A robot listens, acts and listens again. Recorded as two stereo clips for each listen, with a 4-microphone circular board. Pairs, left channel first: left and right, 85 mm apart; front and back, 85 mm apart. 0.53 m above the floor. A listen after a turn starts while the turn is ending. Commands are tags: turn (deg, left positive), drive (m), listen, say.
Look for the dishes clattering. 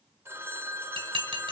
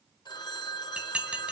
<turn deg="-105"/>
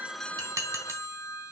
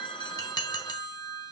<turn deg="-35"/>
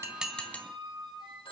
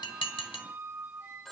<turn deg="15"/>
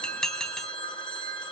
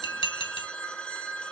<say>Facing the dishes clattering.</say>